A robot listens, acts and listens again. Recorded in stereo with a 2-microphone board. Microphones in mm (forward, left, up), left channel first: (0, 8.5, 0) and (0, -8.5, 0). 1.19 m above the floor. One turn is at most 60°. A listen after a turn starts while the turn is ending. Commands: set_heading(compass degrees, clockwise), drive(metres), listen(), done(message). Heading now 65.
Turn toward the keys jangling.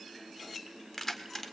set_heading(40)
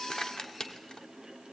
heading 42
set_heading(342)
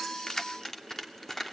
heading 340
set_heading(320)
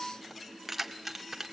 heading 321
set_heading(341)
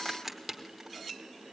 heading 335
set_heading(345)
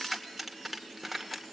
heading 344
done("Found it: keys jangling, straight ahead, 2 to 4 m away.")